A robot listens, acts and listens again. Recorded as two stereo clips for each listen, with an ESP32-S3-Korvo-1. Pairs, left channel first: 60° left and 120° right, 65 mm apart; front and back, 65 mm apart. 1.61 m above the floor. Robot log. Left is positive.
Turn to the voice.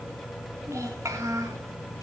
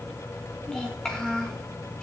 note: The child speaking: 80° right.
cmd yaw -80
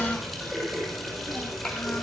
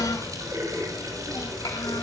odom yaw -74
note: The child speaking is now 10° right.
cmd yaw -10
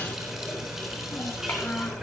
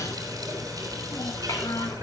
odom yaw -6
cmd idle
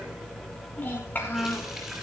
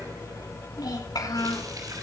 end: Facing the child speaking, over 4 m away.